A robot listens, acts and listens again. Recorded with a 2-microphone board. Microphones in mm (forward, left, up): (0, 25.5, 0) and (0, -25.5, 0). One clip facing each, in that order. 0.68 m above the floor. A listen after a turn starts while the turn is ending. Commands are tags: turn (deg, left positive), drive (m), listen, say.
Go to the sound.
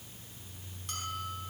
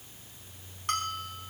<turn deg="-55"/>
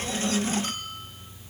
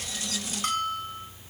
<turn deg="-65"/>
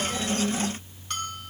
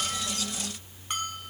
<turn deg="-15"/>
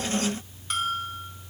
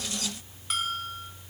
<drive m="1.0"/>
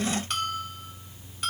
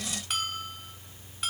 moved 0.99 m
<drive m="1.0"/>
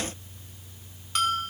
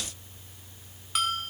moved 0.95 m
<drive m="1.0"/>
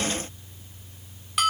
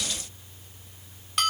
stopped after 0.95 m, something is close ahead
<say>I am next to the bell.</say>